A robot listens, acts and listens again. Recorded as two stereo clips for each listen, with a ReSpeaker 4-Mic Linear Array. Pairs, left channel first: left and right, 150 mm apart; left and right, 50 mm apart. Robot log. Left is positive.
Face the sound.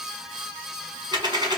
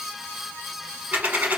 note: The dropped coin: about 30° right or 150° right.
cmd yaw -30
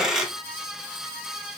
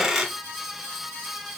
end: Found it: a dropped coin, straight ahead, 1 to 2 m away.